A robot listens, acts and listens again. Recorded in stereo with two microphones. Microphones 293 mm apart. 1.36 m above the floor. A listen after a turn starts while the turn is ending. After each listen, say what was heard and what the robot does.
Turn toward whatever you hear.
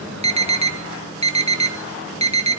The alarm: about 20° right or 160° right. Turn 20° right.
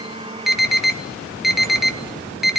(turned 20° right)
Facing the alarm.